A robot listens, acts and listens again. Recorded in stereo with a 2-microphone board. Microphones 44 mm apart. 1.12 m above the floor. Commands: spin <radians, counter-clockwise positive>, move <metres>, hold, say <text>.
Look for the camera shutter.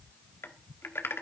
hold
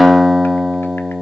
hold
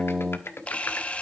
spin 0.52
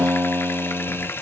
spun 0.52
spin 2.09
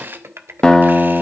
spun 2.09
spin -0.79
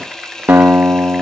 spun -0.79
spin 0.26
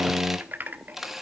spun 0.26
say Facing the camera shutter, 1 to 2 m away.